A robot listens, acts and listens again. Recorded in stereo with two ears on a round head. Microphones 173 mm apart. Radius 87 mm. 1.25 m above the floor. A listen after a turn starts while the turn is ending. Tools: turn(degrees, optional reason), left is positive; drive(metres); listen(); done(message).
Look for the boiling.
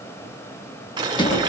turn(degrees=-25, reason="The boiling: about 25° right or 155° right.")
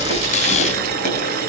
turn(degrees=-125, reason="So it is at 125° right.")
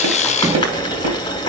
turn(degrees=25, reason="The boiling is now 25° left.")
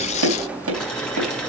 done("Found it: boiling, straight ahead, 2 to 4 m away.")